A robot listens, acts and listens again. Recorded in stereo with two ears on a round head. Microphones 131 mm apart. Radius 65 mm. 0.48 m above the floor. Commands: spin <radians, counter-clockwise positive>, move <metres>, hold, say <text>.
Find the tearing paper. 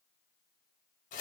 hold
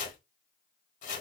hold
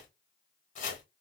say I can't make out tearing paper to turn to.